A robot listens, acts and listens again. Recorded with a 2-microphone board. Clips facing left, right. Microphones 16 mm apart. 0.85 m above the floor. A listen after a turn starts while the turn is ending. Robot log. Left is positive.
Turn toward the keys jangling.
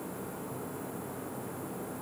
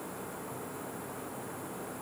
cmd idle
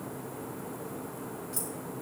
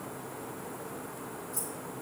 cmd yaw +90
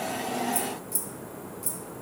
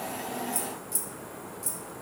note: So it is at 15° right.
cmd yaw -15
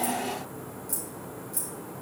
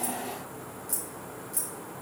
note: The keys jangling is now 10° right.
cmd yaw -10
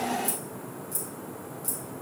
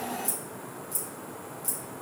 end: Found it: keys jangling, straight ahead.